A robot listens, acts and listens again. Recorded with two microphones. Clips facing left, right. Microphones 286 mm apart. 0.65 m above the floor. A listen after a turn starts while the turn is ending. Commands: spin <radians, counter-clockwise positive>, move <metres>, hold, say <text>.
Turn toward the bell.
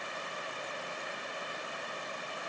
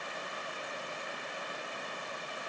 hold
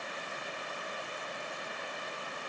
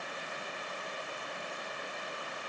hold
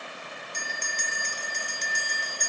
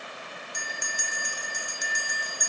spin -0.52
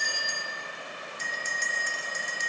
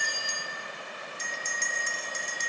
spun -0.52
spin -2.44
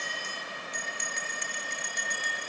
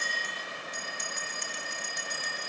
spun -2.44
spin -0.87
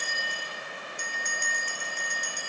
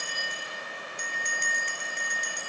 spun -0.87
spin -0.44
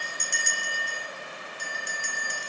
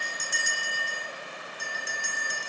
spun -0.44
say Found it: a bell, straight ahead, 1 to 2 m away.